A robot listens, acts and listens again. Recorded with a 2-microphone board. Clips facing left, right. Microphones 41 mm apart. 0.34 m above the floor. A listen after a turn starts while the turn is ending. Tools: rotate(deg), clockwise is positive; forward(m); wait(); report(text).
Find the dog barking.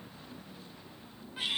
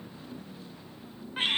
wait()
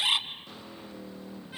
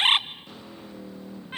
wait()
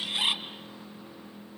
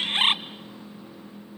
report("I can't make out a dog barking, only a bird.")